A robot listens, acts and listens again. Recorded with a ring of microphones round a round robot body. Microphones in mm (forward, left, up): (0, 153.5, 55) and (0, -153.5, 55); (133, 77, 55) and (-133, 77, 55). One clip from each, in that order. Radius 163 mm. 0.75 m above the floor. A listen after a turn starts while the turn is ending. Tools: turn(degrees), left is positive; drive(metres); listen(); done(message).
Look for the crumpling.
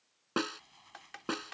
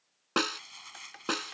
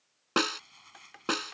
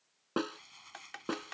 turn(degrees=-100)
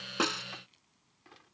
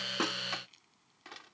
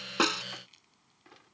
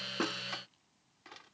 listen()
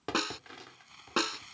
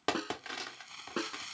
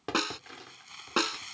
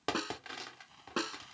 turn(degrees=-25)
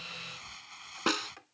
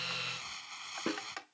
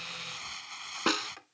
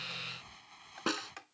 turn(degrees=-15)
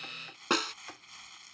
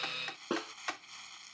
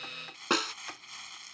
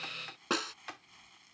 done("Found it: crumpling, straight ahead.")